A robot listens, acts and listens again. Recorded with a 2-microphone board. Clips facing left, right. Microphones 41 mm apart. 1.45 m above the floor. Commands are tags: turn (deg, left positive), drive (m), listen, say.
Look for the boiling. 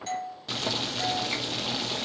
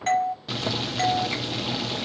<turn deg="-30"/>
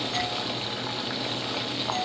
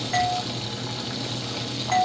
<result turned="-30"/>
<turn deg="20"/>
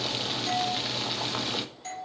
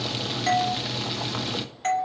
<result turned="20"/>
<say>Facing the boiling, 1 to 2 m away.</say>